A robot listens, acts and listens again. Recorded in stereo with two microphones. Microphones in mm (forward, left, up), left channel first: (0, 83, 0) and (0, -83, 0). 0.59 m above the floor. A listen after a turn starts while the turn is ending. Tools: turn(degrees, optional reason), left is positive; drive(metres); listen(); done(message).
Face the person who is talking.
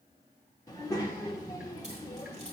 turn(degrees=25, reason="The child speaking: about 25° left or 155° left.")
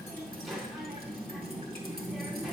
done("Found it: a child speaking, straight ahead, 1 to 2 m away.")